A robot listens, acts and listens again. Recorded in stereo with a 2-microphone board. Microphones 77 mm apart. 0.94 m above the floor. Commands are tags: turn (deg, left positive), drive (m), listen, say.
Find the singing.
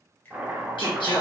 <turn deg="90"/>
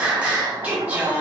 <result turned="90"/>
<turn deg="-25"/>
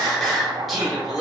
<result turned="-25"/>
<say>Facing the singing.</say>